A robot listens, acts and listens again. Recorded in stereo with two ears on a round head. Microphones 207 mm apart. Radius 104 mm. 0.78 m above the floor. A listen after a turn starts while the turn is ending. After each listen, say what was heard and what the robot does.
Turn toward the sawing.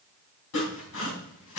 The sawing: about 70° left or 110° left. Turn 70° left.
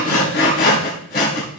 So it is at 45° left. Turn 45° left.
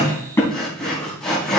Facing the sawing, 2 to 4 m away.